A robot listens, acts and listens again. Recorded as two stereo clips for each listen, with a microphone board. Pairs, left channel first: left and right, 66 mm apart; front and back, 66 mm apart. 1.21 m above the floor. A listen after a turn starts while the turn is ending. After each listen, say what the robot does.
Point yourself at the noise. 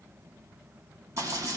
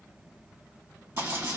Turn 130° right.
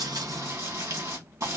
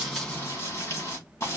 Turn 50° right.
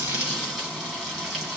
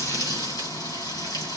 Turn 10° right.
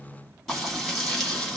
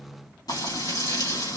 Found it: frying, straight ahead.